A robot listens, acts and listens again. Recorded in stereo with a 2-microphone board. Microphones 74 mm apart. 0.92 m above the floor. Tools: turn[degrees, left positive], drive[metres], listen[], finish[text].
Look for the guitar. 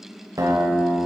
Thought: The guitar: about 50° right or 130° right.
Action: turn[-50]
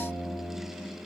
Thought: So it is at 70° right.
Action: turn[-70]
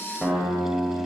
Action: finish[Facing the guitar.]